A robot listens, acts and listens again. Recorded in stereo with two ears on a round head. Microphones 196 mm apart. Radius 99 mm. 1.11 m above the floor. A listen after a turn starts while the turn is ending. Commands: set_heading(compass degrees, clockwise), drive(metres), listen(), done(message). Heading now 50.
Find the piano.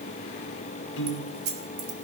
set_heading(350)
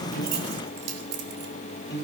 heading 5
set_heading(350)
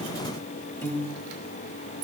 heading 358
set_heading(348)
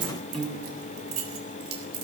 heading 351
done("Found it: a piano, straight ahead, 1 to 2 m away.")